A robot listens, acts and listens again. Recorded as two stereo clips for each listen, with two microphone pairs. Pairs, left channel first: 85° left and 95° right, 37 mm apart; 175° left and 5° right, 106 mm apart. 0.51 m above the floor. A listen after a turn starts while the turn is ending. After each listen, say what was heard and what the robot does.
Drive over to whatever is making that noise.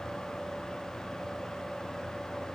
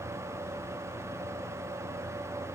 Keep listening.
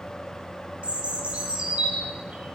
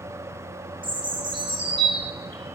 The bird: 40° right. Turn 40° right.
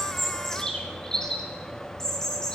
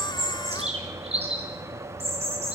The bird is now 10° left. Turn 10° left.
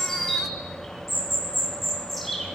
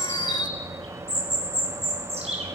Drive 1.0 m forward.
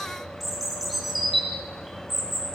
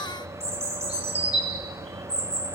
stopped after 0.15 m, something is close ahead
The bird is now 10° right. Turn 10° right.
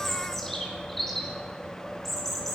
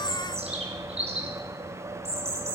Something is in my way. I am facing the bird but have not reached it.